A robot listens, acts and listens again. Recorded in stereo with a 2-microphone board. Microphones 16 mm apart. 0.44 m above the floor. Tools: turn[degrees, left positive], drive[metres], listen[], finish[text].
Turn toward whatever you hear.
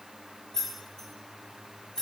Thought: The keys jangling: about 60° left or 120° left.
Action: turn[60]
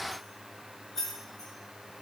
Thought: So it is at 10° left.
Action: turn[10]
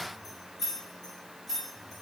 Thought: The keys jangling is now 15° left.
Action: turn[15]
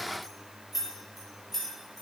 Action: finish[Found it: keys jangling, straight ahead, over 4 m away.]